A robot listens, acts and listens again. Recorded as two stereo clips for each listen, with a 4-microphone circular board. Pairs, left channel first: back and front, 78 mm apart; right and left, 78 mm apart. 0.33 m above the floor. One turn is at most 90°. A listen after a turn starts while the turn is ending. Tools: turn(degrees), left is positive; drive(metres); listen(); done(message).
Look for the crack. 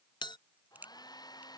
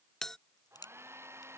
turn(degrees=-70)
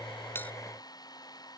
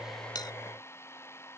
done("I heard a crack from this way, but can't make it out now.")